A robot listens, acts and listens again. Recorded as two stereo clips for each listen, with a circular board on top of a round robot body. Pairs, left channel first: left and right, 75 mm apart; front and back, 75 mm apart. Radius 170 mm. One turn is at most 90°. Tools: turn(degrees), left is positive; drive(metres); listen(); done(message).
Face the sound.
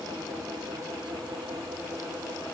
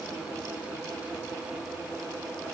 listen()
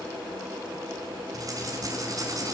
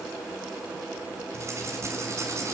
turn(degrees=-90)
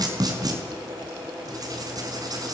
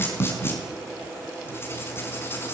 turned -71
turn(degrees=-60)
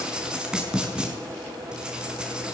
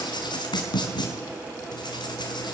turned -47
turn(degrees=-10)
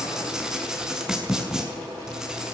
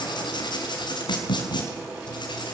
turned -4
turn(degrees=-10)
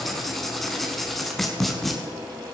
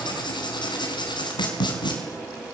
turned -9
done("Facing the writing.")